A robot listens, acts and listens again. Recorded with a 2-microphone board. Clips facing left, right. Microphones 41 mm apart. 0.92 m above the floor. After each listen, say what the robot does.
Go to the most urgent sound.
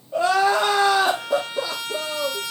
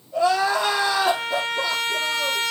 Turn 60° left.
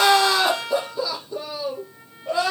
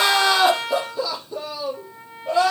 Drive 1.0 m forward.
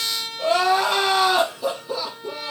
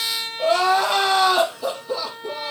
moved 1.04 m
Drive 1.0 m forward.
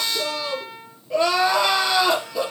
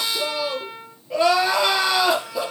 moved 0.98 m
Drive 1.0 m forward.
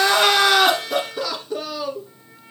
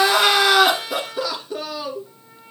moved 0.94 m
Drive 1.0 m forward.
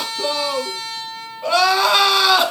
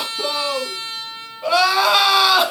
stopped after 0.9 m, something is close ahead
Arrived at the crying, straight ahead.